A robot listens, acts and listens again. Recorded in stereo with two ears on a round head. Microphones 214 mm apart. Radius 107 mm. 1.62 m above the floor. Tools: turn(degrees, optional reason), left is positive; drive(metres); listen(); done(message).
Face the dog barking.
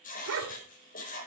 turn(degrees=-60, reason="The dog barking: about 60° right or 120° right.")
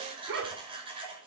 turn(degrees=-55, reason="So it is at 55° right.")
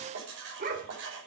turn(degrees=-45, reason="The dog barking is now 45° right.")
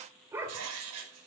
turn(degrees=-10, reason="The dog barking is now 10° right.")
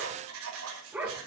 done("Facing the dog barking, 2 to 4 m away.")